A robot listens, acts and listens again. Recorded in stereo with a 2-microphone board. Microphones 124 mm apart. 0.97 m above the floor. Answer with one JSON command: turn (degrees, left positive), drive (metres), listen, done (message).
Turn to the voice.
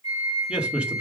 {"turn": -30}
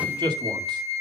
{"turn": -140}
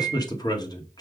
{"turn": 35}
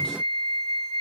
{"listen": true}
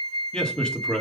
{"done": "Facing the man speaking."}